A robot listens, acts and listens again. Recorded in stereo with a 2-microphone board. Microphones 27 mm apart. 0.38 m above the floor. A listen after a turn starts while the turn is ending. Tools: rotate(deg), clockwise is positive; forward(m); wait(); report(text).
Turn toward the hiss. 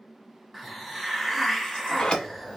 rotate(-30)
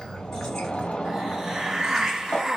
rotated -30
rotate(30)
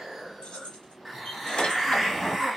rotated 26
report("Found it: a hiss, straight ahead, under 1 m away.")